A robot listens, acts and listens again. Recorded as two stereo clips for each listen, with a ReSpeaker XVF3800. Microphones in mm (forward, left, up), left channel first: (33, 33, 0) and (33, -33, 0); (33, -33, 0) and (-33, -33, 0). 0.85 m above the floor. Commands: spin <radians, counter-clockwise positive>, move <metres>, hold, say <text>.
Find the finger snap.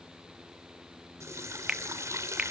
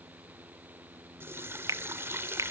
spin -2.79
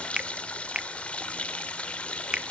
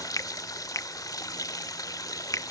spin -0.26
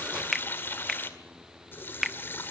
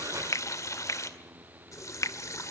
say Facing the finger snap.